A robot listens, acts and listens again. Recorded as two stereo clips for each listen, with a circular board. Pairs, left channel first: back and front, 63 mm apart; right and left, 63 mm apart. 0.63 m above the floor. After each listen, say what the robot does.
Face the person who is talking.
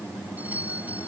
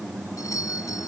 Keep listening.
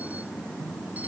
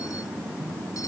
Keep listening.
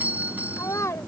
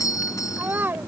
Turn 145° left.
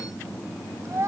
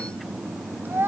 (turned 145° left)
Turn 40° left.
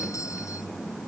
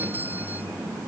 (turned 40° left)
Keep listening.
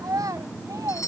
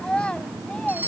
Turn 15° right.
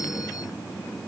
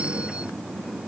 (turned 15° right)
Keep listening.
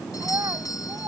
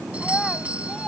Found it: a child speaking, straight ahead.